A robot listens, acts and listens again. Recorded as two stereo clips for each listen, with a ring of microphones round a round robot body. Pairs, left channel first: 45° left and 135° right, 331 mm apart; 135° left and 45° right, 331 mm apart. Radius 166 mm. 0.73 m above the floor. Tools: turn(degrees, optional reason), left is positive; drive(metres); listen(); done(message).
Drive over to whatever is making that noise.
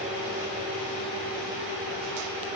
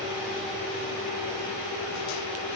listen()
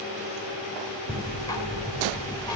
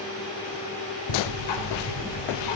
turn(degrees=125, reason="The ticking: 125° left.")
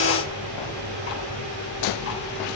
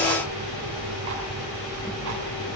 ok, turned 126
drive(metres=1.0)
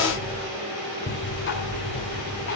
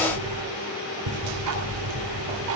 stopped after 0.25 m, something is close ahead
turn(degrees=-10, reason="The ticking is now 10° right.")
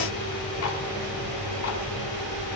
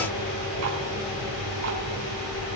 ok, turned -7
done("Something is in my way. I am facing the ticking but have not reached it.")